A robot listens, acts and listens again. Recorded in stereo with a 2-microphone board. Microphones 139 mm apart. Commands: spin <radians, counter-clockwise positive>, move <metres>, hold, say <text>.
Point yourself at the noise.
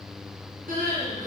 spin -1.31
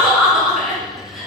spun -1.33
say Facing the crying.